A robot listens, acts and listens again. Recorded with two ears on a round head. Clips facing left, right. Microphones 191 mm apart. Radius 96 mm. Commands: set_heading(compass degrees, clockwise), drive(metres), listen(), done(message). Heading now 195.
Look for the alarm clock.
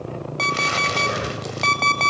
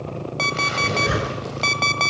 set_heading(165)
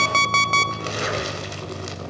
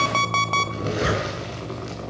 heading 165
set_heading(10)
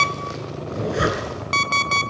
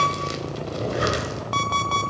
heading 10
set_heading(340)
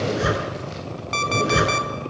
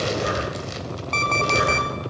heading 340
set_heading(330)
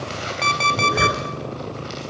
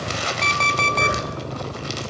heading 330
done("Facing the alarm clock, 1 to 2 m away.")